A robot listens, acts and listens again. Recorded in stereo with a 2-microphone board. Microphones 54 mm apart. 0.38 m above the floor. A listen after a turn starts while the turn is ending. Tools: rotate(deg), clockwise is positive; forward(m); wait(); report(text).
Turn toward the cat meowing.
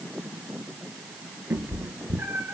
rotate(45)
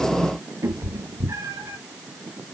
rotate(85)
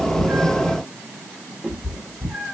rotate(-20)
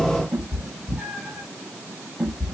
report("Facing the cat meowing, over 4 m away.")